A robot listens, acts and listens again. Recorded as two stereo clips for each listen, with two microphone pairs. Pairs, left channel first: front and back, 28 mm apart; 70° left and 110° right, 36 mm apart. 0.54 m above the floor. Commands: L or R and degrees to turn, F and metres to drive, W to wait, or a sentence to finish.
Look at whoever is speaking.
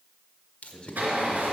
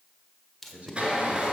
R60
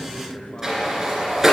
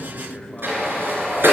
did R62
Found it: a man speaking, straight ahead, 2 to 4 m away.